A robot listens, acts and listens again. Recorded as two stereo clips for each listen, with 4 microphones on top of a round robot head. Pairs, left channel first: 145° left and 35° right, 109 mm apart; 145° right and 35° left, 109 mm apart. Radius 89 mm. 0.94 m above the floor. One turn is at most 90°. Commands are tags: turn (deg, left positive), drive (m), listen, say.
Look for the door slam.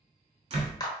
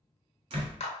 <say>Found it: a door slam, straight ahead, 1 to 2 m away.</say>